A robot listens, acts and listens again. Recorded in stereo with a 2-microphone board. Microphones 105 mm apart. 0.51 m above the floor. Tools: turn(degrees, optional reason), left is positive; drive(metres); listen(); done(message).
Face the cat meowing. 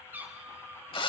turn(degrees=-15, reason="The cat meowing: about 15° right or 165° right.")
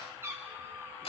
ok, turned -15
turn(degrees=-20, reason="The cat meowing: about 20° right or 160° right.")
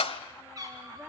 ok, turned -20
turn(degrees=-35, reason="The cat meowing: about 35° right or 145° right.")
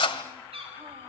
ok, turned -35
turn(degrees=-115, reason="So it is at 115° right.")
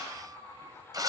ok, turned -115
turn(degrees=-30, reason="The cat meowing is now 30° right.")
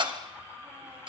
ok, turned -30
listen()
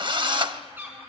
turn(degrees=-20, reason="The cat meowing is now 20° right.")
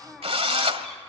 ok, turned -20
listen()
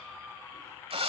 listen()
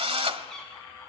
done("Found it: a cat meowing, straight ahead, over 4 m away.")